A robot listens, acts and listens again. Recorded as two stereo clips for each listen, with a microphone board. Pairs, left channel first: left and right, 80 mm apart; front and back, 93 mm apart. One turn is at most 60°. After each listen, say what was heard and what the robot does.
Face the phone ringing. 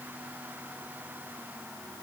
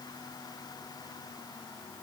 Keep listening.
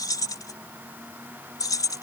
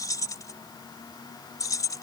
Keep listening.
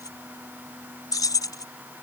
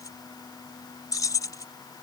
I can't make out a phone ringing to turn to.